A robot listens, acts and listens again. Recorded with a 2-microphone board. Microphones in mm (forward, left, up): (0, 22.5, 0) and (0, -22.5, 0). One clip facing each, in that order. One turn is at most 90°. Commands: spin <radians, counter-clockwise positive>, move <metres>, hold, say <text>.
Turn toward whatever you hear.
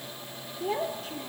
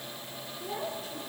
spin 0.79
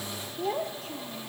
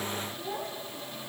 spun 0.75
spin 1.57
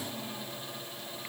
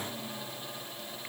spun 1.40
spin 0.26
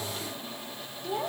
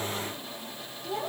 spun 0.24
spin 0.17
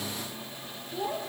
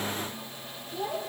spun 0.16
say Found it: a child speaking, straight ahead, over 4 m away.